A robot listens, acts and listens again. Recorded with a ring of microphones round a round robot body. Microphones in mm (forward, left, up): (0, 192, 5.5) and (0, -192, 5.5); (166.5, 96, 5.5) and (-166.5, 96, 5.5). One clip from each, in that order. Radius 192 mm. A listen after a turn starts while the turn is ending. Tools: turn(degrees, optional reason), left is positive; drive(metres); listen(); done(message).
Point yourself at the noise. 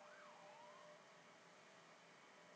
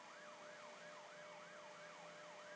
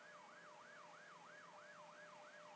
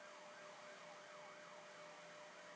listen()
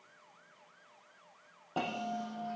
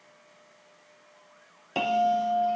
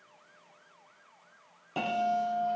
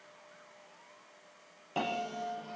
turn(degrees=-95, reason="The bell: 95° right.")
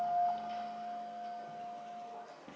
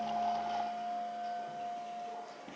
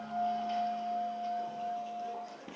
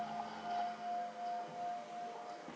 turn(degrees=-15, reason="The bell is now 15° right.")
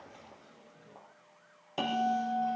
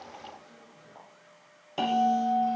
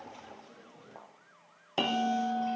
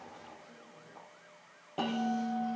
done("Facing the bell, 2 to 4 m away.")